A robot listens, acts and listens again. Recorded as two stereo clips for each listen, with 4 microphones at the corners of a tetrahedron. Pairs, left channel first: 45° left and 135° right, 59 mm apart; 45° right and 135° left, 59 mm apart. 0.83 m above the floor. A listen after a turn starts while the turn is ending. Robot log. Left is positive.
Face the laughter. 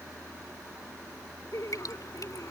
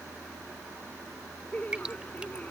note: The laughter: 20° left.
cmd yaw +20
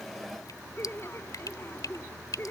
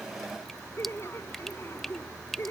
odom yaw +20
end: Found it: laughter, straight ahead.